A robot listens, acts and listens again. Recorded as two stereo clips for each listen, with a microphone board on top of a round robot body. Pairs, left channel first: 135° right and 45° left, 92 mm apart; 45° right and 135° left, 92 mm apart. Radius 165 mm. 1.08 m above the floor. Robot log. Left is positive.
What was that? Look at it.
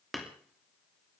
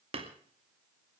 note: The hammering: 135° left.
cmd yaw +135
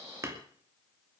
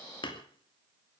note: The hammering is now 15° right.
cmd yaw -15
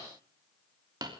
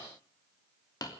end: Facing the hammering.